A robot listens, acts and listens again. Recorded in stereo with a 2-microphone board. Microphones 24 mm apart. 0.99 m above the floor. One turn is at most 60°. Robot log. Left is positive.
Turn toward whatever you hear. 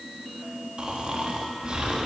note: The snoring: about 45° right or 135° right.
cmd yaw -45
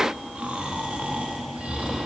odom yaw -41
note: So it is at 95° right.
cmd yaw -60
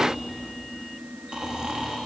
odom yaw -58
note: The snoring is now 35° right.
cmd yaw -35
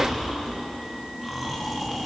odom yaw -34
end: Facing the snoring, 1 to 2 m away.